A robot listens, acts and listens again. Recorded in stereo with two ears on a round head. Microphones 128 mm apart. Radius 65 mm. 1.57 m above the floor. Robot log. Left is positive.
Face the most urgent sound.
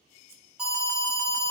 cmd yaw -30
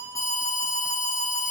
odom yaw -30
note: So it is at 25° left.
cmd yaw +25
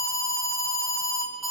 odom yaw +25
end: Found it: an alarm, straight ahead.